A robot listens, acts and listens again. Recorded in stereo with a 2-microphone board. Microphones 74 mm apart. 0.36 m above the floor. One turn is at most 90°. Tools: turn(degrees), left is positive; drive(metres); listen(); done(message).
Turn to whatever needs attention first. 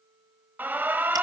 turn(degrees=-25)
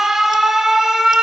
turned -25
done("Found it: an alarm, straight ahead.")